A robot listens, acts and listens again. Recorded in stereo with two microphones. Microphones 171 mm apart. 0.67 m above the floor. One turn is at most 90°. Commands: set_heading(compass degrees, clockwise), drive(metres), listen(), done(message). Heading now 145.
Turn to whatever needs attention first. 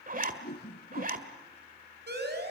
set_heading(210)
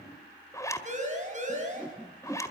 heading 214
set_heading(254)
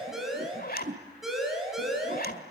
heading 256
done("Facing the siren.")